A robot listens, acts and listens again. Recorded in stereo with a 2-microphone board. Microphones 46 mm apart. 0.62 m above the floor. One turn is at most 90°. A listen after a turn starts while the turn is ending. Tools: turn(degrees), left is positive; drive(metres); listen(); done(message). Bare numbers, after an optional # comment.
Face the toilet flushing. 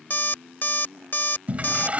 # The toilet flushing: about 30° right or 150° right.
turn(-30)
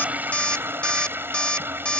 # So it is at 115° right.
turn(-90)
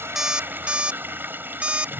# The toilet flushing is now 60° right.
turn(-60)
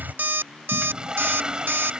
# The toilet flushing is now 20° right.
turn(-20)
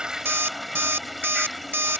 done("Found it: a toilet flushing, straight ahead.")